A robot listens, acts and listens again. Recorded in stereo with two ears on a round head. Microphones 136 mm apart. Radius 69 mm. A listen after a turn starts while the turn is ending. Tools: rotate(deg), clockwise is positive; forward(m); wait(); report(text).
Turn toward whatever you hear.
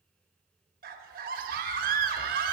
rotate(60)
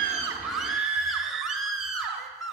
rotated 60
report("Facing the scream, 1 to 2 m away.")